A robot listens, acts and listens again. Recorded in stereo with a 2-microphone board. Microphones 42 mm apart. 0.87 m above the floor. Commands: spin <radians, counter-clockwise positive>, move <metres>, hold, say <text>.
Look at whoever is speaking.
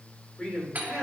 spin 0.44
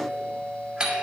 hold
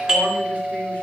hold
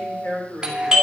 spin 2.27
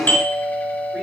hold
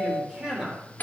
spin -0.35
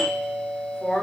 say Facing the man speaking, 2 to 4 m away.